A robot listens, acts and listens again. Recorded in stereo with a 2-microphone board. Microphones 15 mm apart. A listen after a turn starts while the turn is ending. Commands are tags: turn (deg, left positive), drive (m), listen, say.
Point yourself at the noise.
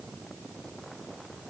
<listen/>
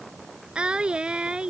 <turn deg="-90"/>
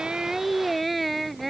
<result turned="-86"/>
<say>Facing the singing.</say>